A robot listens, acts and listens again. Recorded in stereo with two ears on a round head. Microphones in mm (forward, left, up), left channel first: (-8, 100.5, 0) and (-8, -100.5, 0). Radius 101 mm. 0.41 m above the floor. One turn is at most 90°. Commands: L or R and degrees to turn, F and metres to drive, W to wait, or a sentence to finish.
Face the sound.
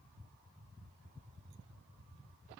W
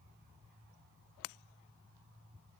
W
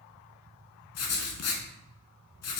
L75
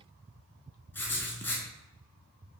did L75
L10
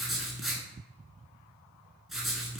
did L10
Found it: writing, straight ahead.